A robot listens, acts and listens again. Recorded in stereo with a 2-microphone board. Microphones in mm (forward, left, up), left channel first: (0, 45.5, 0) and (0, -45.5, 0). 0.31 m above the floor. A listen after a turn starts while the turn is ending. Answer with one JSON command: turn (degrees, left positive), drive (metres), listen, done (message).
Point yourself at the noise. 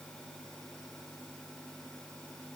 {"listen": true}
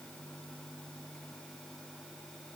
{"listen": true}
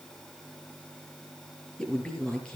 {"turn": 30}
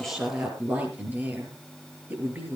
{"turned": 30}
{"turn": -20}
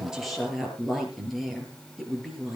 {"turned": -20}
{"done": "Found it: a woman speaking, straight ahead, over 4 m away."}